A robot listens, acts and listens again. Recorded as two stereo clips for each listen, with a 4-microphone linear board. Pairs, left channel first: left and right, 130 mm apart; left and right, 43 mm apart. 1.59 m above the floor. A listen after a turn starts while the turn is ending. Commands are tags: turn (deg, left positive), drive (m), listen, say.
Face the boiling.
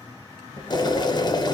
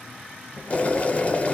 <turn deg="30"/>
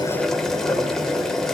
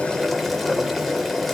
<say>Facing the boiling, under 1 m away.</say>